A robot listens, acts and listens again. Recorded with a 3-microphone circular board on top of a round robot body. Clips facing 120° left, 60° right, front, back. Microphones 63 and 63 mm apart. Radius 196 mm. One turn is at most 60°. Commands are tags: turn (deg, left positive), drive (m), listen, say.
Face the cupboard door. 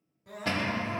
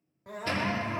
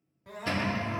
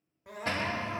<turn deg="60"/>
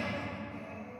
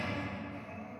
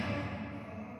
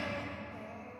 <turn deg="60"/>
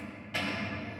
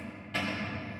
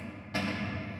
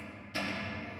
<turn deg="30"/>
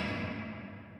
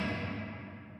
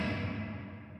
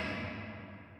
<say>Facing the cupboard door, 2 to 4 m away.</say>